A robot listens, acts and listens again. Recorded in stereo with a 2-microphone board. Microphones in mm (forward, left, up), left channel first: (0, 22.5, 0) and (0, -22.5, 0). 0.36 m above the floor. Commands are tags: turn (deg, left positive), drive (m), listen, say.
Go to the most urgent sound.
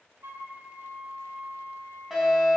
<turn deg="-30"/>
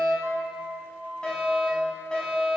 <turn deg="25"/>
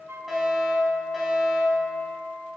<drive m="1.0"/>
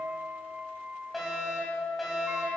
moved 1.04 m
<drive m="1.0"/>
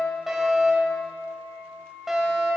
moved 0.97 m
<turn deg="-10"/>
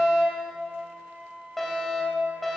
<drive m="1.0"/>
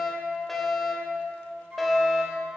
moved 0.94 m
<drive m="1.0"/>
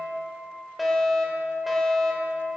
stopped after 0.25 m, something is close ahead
<say>I am next to the fire alarm.</say>